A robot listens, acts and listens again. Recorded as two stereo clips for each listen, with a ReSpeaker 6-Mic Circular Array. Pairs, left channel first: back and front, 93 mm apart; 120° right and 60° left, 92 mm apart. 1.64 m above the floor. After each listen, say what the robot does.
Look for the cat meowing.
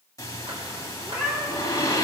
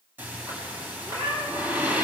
Turn 80° left.
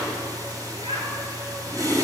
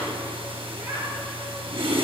Keep listening.
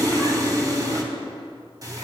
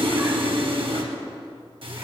Keep listening.
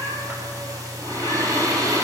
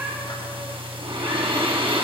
Facing where the cat meowing came from. I can't hear it now.